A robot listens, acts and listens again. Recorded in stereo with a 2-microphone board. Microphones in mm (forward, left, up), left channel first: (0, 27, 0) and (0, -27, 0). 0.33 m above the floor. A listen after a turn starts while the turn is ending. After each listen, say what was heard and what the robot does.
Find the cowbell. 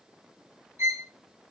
Keep listening.
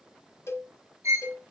The cowbell: about 65° left or 115° left. Turn 65° left.
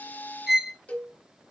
So it is at 30° left. Turn 30° left.
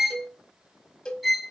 The cowbell is now 20° left. Turn 20° left.
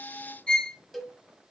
Facing the cowbell, 1 to 2 m away.